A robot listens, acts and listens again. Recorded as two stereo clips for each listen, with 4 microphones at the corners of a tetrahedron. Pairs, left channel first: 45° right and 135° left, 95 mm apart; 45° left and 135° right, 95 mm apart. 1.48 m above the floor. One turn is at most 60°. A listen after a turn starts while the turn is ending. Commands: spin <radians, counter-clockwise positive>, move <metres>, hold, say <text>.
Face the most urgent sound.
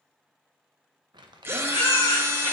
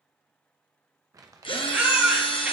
spin -1.05
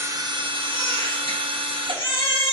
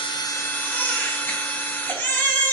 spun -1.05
spin -0.35
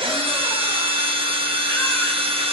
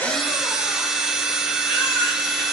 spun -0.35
hold
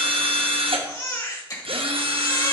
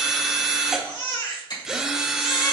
say Facing the baby crying.